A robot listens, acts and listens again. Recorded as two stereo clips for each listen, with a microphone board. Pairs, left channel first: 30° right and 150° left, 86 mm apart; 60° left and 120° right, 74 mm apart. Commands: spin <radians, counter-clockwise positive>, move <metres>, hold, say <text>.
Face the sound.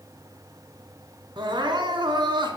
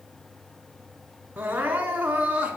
spin 2.97
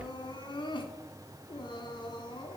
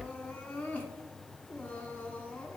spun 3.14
spin -0.17
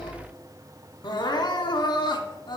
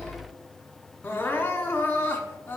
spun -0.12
say Facing the crying.